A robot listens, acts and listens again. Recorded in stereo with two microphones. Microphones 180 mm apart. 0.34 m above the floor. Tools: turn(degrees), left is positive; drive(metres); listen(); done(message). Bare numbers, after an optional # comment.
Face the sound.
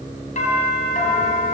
# The doorbell: about 45° left or 135° left.
turn(45)
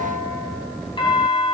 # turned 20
# So it is at 35° left.
turn(35)
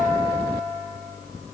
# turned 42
# The doorbell is now 10° right.
turn(-10)
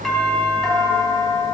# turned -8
done("Facing the doorbell, 2 to 4 m away.")